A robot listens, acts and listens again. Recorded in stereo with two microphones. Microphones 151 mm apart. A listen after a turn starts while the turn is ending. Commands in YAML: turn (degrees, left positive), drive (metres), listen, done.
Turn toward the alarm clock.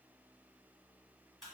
listen: true
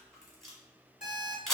turn: 55
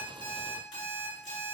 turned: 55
turn: 60
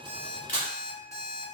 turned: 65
done: "Found it: an alarm clock, straight ahead, 1 to 2 m away."